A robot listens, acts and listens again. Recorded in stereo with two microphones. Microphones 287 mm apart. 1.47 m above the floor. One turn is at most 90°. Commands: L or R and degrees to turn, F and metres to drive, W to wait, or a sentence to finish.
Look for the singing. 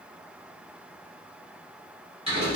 W
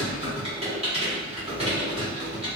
W
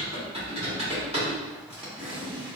I can't make out singing, only typing on a keyboard.